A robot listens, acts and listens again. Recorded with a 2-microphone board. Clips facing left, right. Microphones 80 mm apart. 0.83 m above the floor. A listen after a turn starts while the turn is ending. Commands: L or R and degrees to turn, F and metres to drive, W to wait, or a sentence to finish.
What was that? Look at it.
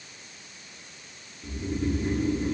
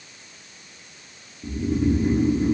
R30
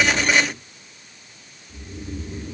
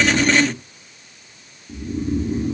R135
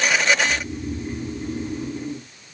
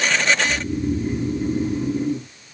R10
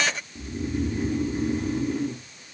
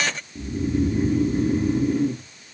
Facing the snoring.